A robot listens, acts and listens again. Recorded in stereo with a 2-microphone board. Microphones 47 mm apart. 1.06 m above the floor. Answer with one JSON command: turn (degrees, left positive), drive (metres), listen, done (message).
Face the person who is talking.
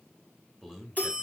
{"turn": 30}
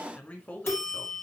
{"turn": 140}
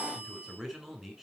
{"turn": -15}
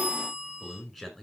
{"done": "Found it: a man speaking, straight ahead, over 4 m away."}